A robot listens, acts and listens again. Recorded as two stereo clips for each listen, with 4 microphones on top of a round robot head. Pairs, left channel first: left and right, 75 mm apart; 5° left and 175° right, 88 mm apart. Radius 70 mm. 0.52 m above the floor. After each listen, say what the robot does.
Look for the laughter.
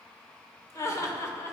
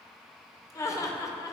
Turn 45° left.
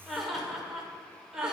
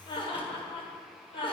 Turn 10° right.
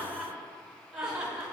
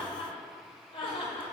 Turn 15° right.
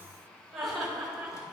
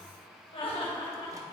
Facing the laughter, 2 to 4 m away.